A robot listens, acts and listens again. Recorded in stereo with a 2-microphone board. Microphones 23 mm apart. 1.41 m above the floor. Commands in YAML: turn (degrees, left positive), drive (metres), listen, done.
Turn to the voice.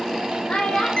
turn: 90
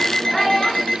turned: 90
listen: true
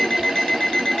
listen: true
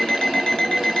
done: "I heard a child speaking from this way, but can't make it out now."